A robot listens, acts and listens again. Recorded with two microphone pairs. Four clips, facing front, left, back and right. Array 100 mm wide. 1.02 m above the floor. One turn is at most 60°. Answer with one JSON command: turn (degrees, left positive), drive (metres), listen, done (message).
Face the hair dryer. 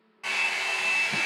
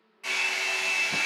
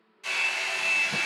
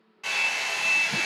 {"turn": -30}
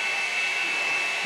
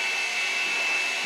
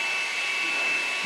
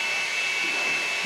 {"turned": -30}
{"done": "Found it: a hair dryer, straight ahead, 1 to 2 m away."}